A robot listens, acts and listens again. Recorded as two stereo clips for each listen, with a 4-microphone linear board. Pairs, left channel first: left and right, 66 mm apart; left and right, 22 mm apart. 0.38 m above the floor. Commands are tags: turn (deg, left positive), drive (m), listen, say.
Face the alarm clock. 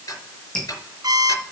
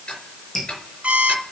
<turn deg="-90"/>
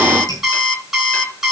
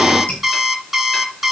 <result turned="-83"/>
<say>Found it: an alarm clock, straight ahead, 2 to 4 m away.</say>